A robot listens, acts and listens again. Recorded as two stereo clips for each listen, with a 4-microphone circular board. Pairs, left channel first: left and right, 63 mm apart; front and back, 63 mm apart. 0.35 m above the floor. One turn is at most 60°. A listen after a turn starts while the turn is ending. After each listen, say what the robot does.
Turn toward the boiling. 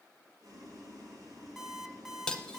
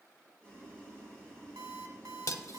Turn 60° right.
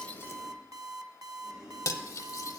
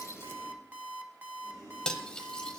Turn 15° right.
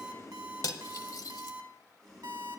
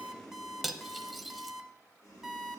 Facing the boiling, 2 to 4 m away.